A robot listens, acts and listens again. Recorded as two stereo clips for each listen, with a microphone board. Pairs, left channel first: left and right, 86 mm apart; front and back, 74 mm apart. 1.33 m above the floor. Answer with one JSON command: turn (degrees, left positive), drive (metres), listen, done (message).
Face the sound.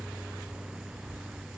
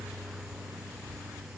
{"listen": true}
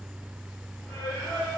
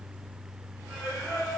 {"turn": 25}
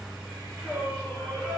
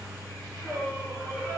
{"turn": -10}
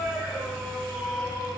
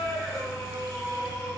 {"done": "Facing the singing."}